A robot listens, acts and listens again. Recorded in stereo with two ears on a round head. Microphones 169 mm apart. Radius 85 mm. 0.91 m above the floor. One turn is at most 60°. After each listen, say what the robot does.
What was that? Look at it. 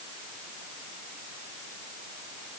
Keep listening.
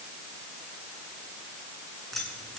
Turn 30° left.
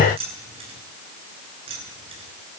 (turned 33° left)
Turn 30° right.
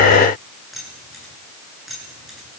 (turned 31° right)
Facing the keys jangling.